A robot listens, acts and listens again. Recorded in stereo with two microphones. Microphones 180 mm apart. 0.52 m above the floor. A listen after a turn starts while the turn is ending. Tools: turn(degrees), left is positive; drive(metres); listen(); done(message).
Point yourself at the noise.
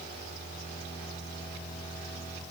listen()
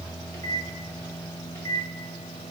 turn(degrees=15)
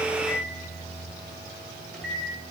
done("Facing the microwave, 1 to 2 m away.")